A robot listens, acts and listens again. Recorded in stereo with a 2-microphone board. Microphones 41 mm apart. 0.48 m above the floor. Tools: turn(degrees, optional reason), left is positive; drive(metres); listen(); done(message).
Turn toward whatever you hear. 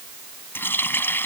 turn(degrees=65, reason="The running tap: about 65° left or 115° left.")
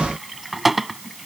done("Found it: a running tap, straight ahead.")